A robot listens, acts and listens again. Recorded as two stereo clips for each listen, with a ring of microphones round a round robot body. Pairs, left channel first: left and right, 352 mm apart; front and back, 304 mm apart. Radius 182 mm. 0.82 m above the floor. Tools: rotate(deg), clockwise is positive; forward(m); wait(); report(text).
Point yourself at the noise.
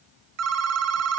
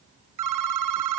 rotate(140)
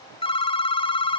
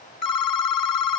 rotate(-15)
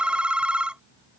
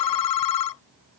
report("Found it: a phone ringing, straight ahead.")